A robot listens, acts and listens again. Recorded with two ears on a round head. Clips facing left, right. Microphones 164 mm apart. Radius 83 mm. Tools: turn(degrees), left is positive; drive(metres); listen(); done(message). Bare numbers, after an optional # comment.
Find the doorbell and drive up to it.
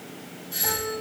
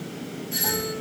# The doorbell: about 25° right or 155° right.
turn(-25)
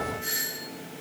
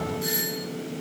# So it is at 125° right.
turn(-125)
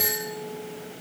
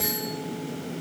drive(1.0)
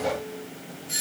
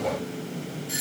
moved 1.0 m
# The doorbell is now 20° right.
turn(-20)
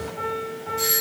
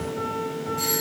drive(1.0)
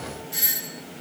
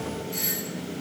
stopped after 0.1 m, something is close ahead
# The doorbell is now 10° left.
turn(10)
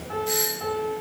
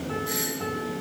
done("Arrived at the doorbell, straight ahead.")